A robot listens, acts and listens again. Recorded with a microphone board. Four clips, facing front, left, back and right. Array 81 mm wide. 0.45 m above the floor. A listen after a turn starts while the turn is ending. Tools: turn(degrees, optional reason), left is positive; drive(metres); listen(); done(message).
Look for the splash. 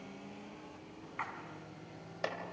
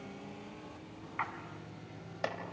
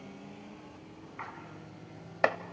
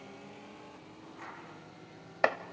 turn(degrees=80, reason="The splash: 80° left.")
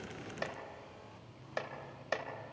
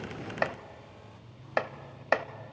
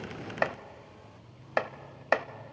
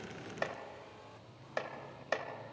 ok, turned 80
done("Facing where the splash came from. I can't hear it now.")